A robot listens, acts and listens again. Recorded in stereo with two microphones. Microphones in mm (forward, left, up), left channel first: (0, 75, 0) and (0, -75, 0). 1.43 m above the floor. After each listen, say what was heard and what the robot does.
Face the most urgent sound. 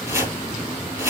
Keep listening.
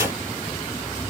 Keep listening.
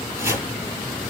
I can't make out anything urgent to turn to.